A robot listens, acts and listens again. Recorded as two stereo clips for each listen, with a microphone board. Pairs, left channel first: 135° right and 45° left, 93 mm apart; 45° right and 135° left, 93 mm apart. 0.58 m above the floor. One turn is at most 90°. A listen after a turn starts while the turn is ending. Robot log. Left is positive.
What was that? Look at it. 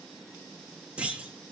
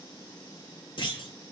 note: The clunk: 30° right.
cmd yaw -30
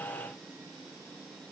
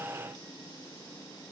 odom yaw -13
note: Nothing new. It was at 15° right.
cmd yaw -15
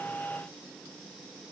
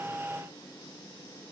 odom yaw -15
end: Facing where the clunk came from. I can't hear it now.